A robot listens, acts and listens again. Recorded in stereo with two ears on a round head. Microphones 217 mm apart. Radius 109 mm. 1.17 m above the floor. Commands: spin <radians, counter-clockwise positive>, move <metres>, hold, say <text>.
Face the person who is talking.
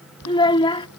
spin 0.35
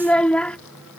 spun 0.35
say Facing the child speaking.